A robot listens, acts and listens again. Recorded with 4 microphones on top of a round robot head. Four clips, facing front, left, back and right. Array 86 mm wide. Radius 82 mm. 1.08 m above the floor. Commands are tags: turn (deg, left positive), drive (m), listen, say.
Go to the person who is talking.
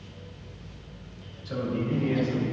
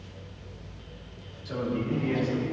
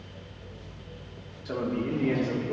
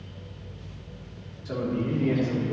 <turn deg="-165"/>
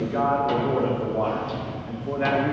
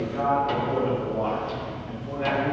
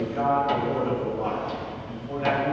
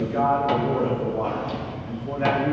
<turn deg="-30"/>
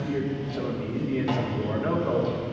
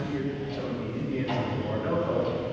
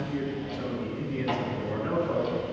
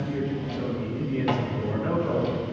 <turn deg="-10"/>
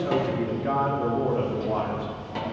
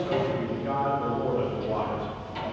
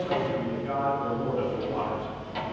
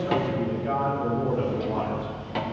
<drive m="1.0"/>
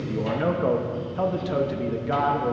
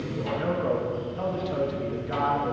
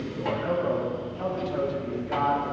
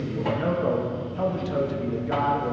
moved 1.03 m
<turn deg="-15"/>
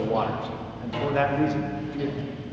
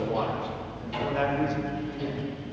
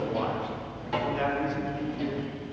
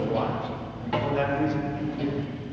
<drive m="1.0"/>
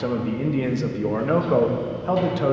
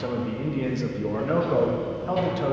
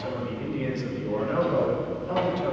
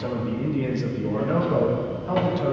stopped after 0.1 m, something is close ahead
<say>I am next to the man speaking.</say>